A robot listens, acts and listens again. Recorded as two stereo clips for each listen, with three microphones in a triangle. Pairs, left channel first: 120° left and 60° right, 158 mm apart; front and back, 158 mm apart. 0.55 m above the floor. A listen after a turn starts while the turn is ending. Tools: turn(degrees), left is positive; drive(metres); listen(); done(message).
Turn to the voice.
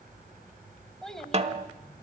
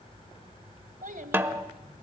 turn(degrees=-150)
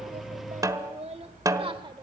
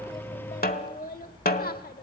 done("Found it: a child speaking, straight ahead.")